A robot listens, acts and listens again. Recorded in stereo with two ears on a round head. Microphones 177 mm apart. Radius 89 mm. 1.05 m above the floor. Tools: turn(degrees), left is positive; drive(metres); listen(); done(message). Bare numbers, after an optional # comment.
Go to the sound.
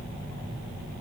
listen()
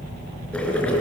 turn(30)
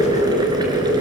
# So it is at 20° right.
turn(-20)
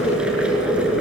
drive(1.0)
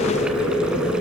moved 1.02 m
drive(1.0)
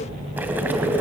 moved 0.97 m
# The boiling is now 10° right.
turn(-10)
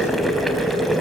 drive(1.0)
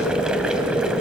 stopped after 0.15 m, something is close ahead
done("Arrived at the boiling, straight ahead.")